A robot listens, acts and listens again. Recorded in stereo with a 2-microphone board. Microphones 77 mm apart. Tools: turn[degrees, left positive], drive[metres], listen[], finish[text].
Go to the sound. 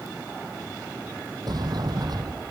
Thought: The sliding door: about 60° right or 120° right.
Action: turn[-60]
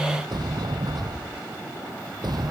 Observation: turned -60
Thought: So it is at 60° right.
Action: turn[-60]
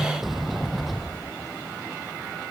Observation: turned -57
Action: drive[1.0]
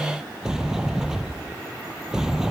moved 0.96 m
Action: drive[1.0]
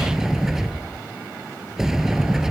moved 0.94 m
Action: drive[1.0]
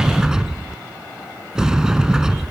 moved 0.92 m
Thought: The sliding door is now 10° right.
Action: turn[-10]
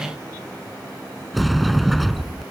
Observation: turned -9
Action: drive[1.0]
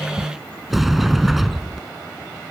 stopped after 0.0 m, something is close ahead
Action: finish[I am next to the sliding door.]